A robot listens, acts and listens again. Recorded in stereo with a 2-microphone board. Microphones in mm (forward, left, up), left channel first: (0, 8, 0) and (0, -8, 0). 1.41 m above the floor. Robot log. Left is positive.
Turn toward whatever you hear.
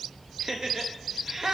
note: The laughter: about 30° right or 150° right.
cmd yaw -30
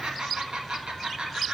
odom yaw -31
note: So it is at 115° right.
cmd yaw -115
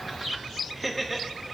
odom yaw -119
end: Found it: laughter, straight ahead.